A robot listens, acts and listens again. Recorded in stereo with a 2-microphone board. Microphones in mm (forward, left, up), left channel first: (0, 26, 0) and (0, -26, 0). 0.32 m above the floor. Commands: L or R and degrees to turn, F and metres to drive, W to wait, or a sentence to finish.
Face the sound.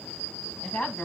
L25
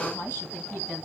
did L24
L140
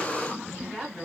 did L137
Facing the woman speaking.